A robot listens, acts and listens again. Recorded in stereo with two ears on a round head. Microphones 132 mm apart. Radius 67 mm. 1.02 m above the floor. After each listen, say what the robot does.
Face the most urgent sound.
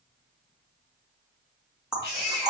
Turn 90° left.
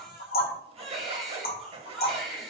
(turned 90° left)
Facing the baby crying, 2 to 4 m away.